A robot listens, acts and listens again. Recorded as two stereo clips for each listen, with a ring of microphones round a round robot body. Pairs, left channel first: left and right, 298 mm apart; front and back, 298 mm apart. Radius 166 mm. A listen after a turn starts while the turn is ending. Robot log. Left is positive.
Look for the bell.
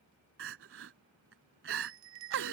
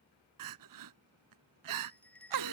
note: The bell: 85° right.
cmd yaw -85
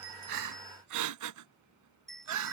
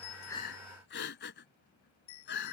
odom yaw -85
end: Found it: a bell, straight ahead.